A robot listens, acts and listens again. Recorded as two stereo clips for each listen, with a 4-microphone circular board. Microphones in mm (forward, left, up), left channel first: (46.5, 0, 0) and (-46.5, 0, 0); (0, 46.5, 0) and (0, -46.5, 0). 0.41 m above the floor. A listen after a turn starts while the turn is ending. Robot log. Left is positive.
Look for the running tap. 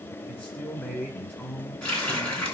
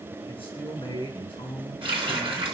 note: The running tap: 75° right.
cmd yaw -75
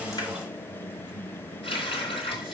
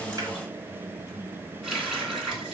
end: Facing the running tap, 2 to 4 m away.